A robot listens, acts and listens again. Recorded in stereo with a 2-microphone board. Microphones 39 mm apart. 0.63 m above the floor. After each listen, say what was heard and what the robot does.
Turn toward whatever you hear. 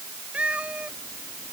The cat meowing: about 30° right or 150° right. Turn 30° right.
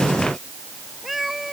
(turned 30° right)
Found it: a cat meowing, straight ahead.